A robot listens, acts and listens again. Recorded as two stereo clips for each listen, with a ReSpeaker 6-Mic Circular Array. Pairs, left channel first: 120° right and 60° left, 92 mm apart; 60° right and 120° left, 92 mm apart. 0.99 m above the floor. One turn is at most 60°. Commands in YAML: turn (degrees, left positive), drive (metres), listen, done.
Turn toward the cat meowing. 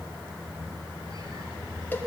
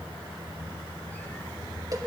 listen: true
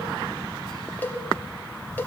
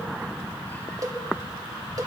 listen: true
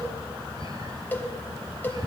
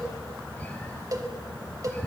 done: "I can't make out a cat meowing to turn to."